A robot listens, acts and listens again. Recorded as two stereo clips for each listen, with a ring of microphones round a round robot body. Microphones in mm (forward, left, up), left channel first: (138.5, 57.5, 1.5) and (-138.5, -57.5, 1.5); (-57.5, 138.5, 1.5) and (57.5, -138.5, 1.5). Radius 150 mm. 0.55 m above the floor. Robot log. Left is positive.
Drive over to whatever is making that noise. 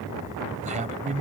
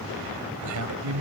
note: The man speaking: 95° right.
cmd yaw -95
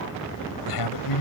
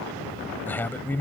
note: The man speaking is now 30° left.
cmd yaw +30
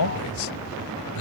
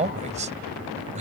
cmd fwd 1.0
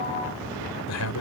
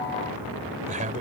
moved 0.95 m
cmd fwd 1.0
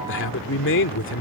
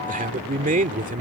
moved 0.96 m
note: The man speaking is now 10° right.
cmd yaw -10
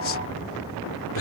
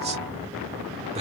cmd fwd 1.0
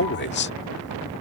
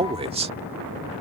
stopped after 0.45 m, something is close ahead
end: Arrived at the man speaking, straight ahead.